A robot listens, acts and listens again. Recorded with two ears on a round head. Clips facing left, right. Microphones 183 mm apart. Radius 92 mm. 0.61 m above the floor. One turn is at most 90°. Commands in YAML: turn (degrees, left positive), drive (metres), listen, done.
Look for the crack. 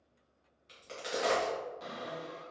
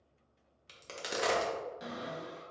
turn: -60
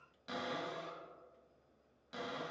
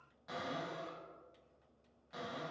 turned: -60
listen: true
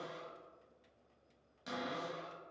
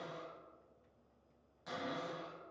done: "I heard a crack, but can't make it out now. It was about straight ahead or 60° right."